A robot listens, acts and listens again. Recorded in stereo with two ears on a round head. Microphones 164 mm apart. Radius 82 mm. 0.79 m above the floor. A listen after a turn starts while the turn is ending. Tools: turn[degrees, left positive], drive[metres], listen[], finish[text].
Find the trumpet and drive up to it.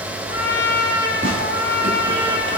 Thought: The trumpet: about 60° left or 120° left.
Action: turn[60]
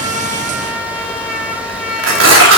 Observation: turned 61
Action: drive[1.0]
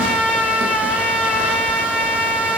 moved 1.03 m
Action: drive[1.0]
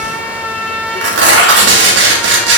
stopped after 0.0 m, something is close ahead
Action: finish[Arrived at the trumpet, straight ahead.]